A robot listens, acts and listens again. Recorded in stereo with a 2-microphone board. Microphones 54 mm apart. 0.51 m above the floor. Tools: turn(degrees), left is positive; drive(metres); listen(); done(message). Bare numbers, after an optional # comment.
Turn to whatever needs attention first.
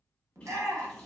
# The shout: about 55° right or 125° right.
turn(-55)
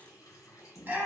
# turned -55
# So it is at 35° right.
turn(-35)
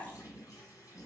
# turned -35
listen()
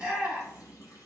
# The shout is now 20° right.
turn(-20)
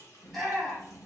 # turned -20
done("Found it: a shout, straight ahead, 1 to 2 m away.")